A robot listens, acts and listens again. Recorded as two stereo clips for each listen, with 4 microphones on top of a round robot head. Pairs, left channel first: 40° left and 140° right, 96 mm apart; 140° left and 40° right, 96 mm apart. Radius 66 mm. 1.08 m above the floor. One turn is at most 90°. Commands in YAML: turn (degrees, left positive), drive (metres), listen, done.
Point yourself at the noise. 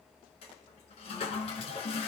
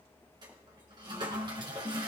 turn: 10
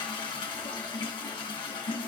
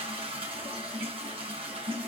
done: "Found it: a toilet flushing, straight ahead, 2 to 4 m away."